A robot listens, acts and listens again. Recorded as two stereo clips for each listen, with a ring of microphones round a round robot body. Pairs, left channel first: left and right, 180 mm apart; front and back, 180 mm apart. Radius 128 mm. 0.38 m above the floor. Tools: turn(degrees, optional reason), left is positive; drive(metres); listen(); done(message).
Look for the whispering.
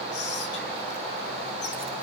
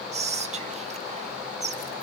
turn(degrees=130, reason="The whispering: 130° left.")
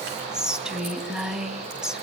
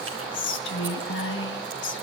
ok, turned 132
done("Facing the whispering.")